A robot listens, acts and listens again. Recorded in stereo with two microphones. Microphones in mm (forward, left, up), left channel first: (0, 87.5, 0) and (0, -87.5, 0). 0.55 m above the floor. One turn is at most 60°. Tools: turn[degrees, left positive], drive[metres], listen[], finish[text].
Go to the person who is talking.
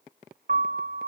Action: listen[]
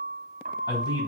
Thought: The man speaking: about 25° left or 155° left.
Action: turn[25]
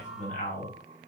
Thought: So it is at 130° left.
Action: turn[60]
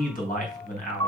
Thought: The man speaking is now 55° left.
Action: turn[55]
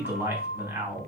Thought: The man speaking is now 15° right.
Action: turn[-15]
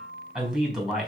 Action: drive[1.0]
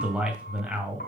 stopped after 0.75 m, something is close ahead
Thought: The man speaking is now 10° right.
Action: turn[-10]
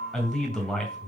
Action: finish[Something is in my way. I am facing the man speaking but have not reached it.]